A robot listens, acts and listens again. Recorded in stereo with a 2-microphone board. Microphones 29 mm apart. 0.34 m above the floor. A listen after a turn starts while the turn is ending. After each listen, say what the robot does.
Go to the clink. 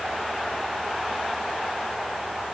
Keep listening.
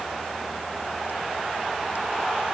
Keep listening.
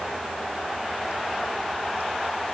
I can't make out a clink to turn to.